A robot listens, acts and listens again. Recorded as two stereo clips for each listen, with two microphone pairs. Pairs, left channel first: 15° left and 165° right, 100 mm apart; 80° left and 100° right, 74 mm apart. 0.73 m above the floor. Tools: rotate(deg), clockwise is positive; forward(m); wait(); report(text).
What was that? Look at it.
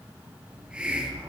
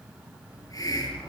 rotate(-115)
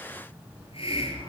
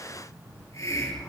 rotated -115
rotate(-35)
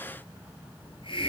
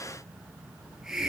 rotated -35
rotate(15)
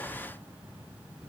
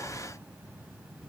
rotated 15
wait()
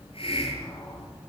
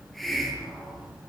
report("Found it: a hiss, straight ahead.")